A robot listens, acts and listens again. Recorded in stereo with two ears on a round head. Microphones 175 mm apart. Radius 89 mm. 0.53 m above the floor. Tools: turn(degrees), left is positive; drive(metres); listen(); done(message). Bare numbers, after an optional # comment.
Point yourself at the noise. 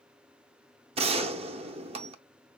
# The gunshot: about 30° right or 150° right.
turn(-30)
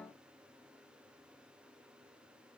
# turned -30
listen()
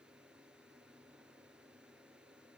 done("I heard a gunshot, but can't make it out now. It was about straight ahead or 120° right.")